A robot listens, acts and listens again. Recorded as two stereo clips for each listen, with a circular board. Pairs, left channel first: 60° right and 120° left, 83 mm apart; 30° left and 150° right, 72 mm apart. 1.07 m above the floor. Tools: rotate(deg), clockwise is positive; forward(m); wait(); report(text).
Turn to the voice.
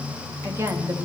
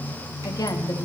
rotate(-60)
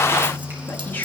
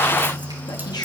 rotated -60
rotate(-10)
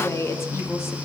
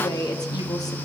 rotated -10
report("Found it: a woman speaking, straight ahead.")